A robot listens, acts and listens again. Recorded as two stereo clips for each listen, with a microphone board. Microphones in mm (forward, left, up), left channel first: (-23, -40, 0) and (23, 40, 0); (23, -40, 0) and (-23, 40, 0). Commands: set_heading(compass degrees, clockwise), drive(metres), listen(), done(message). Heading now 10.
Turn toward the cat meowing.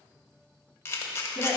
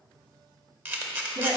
listen()
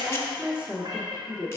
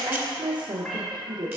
set_heading(355)
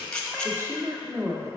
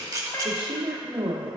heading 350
listen()
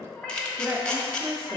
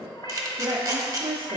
set_heading(30)
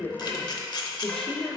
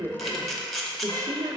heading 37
listen()
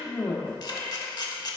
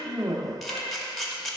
listen()
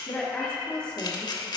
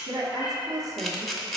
set_heading(57)
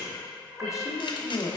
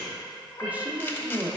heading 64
set_heading(54)
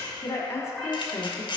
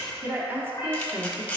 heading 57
listen()
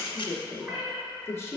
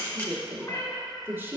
done("Facing the cat meowing.")